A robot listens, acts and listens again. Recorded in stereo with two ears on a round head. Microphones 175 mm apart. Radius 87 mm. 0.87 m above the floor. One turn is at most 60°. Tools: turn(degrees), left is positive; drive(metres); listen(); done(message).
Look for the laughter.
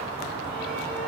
listen()
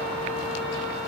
listen()
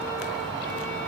done("I can't make out laughter to turn to.")